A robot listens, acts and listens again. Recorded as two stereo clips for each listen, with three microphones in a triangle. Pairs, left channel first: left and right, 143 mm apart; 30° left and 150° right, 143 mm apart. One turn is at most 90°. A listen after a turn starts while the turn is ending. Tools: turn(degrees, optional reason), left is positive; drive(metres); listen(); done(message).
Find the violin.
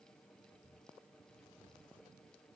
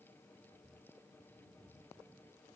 listen()
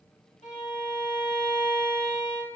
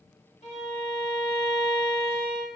turn(degrees=60, reason="The violin: 60° left.")
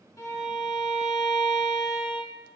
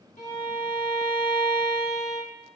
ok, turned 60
done("Facing the violin, 2 to 4 m away.")